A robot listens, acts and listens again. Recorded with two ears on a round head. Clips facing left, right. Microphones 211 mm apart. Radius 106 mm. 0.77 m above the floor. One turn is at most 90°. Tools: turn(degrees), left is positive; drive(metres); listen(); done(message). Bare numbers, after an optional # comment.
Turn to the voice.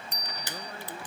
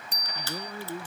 turn(-90)
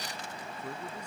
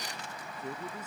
done("Found it: a man speaking, straight ahead.")